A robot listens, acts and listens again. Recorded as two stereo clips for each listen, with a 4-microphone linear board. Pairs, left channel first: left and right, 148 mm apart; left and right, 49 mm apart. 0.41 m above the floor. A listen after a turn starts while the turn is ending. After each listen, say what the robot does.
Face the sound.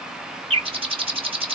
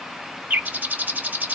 Turn 40° right.
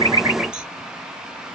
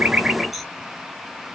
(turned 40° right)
Keep listening.
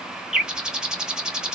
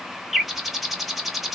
Found it: a bird, straight ahead, under 1 m away.